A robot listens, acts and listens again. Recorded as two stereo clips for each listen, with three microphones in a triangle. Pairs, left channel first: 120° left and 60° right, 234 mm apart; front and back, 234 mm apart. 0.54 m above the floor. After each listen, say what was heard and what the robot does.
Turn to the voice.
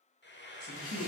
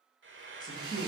The man speaking: 70° right. Turn 70° right.
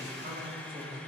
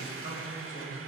The man speaking is now 25° right. Turn 25° right.
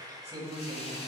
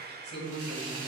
Found it: a man speaking, straight ahead.